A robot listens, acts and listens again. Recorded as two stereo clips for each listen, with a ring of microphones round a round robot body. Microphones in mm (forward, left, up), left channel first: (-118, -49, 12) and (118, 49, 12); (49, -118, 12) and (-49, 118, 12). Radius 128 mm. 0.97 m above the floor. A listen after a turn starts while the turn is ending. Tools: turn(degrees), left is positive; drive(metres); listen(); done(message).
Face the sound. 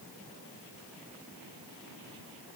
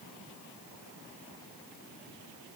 listen()
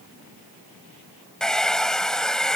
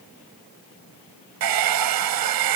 turn(degrees=115)
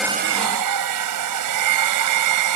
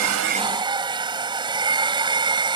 turn(degrees=40)
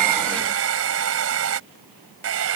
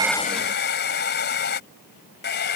turn(degrees=-15)
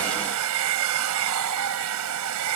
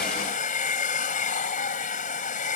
done("Found it: a hair dryer, straight ahead.")